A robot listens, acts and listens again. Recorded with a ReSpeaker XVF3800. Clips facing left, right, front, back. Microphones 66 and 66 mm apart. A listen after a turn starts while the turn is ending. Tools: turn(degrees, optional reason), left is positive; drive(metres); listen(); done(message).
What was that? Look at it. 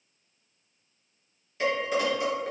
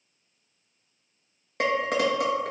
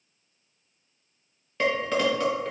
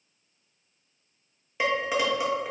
turn(degrees=-100, reason="The dishes clattering: 100° right.")
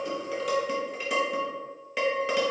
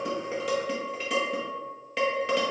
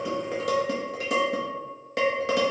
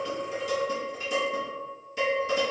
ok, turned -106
done("Facing the dishes clattering.")